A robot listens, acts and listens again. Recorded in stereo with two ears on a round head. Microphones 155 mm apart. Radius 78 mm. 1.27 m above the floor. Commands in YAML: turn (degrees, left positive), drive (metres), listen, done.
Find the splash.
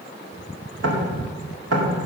listen: true
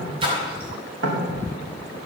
turn: -30
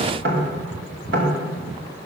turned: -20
listen: true
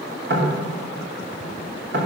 done: "I heard a splash, but can't make it out now. It was about 10° right or 130° right."